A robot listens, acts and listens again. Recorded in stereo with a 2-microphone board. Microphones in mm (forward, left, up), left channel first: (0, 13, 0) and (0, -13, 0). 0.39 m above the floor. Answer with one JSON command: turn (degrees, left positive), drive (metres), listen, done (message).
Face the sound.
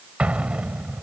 {"turn": -50}
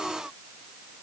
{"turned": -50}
{"listen": true}
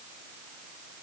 {"done": "I heard an explosion, but can't make it out now. It was about straight ahead or 80° right."}